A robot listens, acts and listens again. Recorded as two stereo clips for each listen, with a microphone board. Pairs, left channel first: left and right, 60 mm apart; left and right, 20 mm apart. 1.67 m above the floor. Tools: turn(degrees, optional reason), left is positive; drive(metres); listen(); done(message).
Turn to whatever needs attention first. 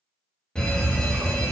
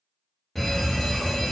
turn(degrees=30)
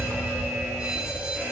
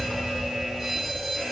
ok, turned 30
turn(degrees=-15, reason="So it is at 15° right.")
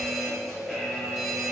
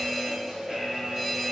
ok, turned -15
done("Facing the fire alarm.")